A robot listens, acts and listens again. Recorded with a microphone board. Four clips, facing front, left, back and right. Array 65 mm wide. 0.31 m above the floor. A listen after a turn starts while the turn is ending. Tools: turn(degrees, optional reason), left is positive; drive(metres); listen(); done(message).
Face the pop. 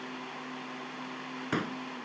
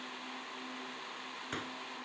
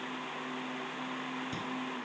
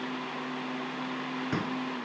turn(degrees=-10, reason="The pop: 10° right.")
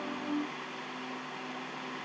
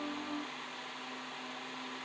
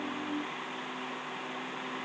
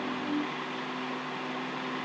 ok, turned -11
done("I heard a pop from this way, but can't make it out now.")